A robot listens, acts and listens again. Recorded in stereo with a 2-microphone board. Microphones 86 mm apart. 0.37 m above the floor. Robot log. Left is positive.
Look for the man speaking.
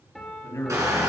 note: The man speaking: about 40° left or 140° left.
cmd yaw +40
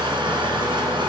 cmd idle
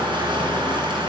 cmd idle
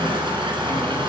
end: I heard a man speaking, but can't make it out now. It was about straight ahead or 100° left.